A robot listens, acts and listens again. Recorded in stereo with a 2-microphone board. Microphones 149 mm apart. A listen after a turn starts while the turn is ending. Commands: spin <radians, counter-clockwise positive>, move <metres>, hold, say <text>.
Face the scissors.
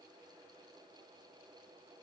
hold
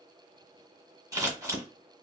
spin -0.44
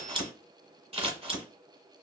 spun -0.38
spin -2.36
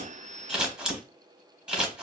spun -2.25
say Found it: scissors, straight ahead, 1 to 2 m away.